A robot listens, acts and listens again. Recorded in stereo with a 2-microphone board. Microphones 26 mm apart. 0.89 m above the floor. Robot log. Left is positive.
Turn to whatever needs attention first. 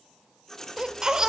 note: The baby crying: about 20° right or 160° right.
cmd yaw -20
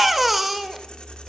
end: Facing the baby crying.